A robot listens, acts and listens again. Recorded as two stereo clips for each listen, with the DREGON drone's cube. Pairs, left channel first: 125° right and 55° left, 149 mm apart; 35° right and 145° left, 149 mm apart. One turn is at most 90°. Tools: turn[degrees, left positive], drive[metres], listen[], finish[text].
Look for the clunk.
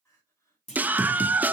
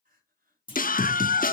Thought: The clunk: 90° right.
Action: turn[-90]
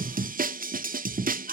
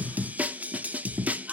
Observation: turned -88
Action: finish[I heard a clunk from this way, but can't make it out now.]